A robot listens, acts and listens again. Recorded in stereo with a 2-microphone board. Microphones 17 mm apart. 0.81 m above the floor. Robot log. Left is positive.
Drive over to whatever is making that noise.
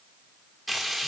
cmd yaw +30
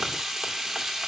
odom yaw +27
note: So it is at 25° right.
cmd yaw -25
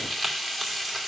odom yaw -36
note: The frying is now 10° left.
cmd yaw +10
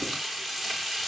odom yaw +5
cmd fwd 1.0
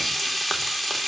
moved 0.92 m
note: The frying is now 10° left.
cmd yaw +10
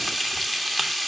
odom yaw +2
cmd fwd 1.0
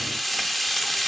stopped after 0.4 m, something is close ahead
note: The frying is now 10° left.
cmd yaw +10
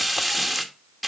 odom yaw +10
end: Arrived at the frying, straight ahead.